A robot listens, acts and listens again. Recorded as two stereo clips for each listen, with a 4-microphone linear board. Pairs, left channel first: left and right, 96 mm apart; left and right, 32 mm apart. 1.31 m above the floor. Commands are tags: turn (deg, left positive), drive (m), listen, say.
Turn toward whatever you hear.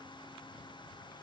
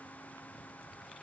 <listen/>
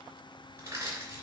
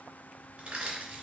<turn deg="-30"/>
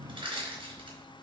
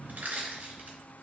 <turn deg="-120"/>
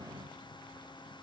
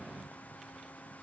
<listen/>
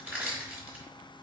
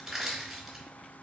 <turn deg="-15"/>
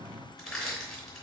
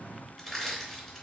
<say>Found it: crushing, straight ahead.</say>